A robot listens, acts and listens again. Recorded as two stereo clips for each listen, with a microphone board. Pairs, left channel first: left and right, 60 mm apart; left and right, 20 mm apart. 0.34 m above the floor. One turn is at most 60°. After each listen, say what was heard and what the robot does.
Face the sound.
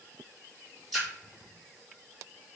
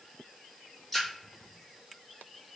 Turn 30° left.
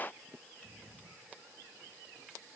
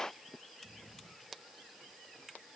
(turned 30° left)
Keep listening.
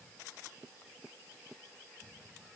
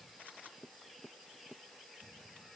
I heard a splash, but can't make it out now. It was about 30° right or 150° left.